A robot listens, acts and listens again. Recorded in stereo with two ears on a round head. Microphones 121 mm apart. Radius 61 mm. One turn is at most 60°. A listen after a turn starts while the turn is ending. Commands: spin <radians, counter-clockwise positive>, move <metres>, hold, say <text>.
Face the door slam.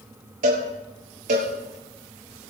hold
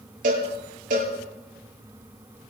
hold
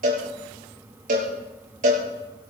say I can't make out a door slam, only a cowbell.